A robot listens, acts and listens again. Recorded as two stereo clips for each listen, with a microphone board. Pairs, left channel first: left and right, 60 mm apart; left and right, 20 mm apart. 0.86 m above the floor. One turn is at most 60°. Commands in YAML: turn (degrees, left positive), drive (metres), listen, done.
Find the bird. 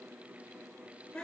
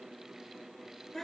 listen: true
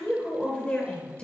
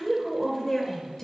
listen: true
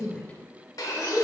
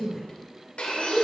turn: 60
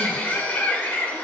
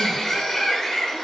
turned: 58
turn: 30
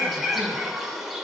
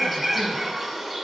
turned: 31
done: "Facing the bird, 1 to 2 m away."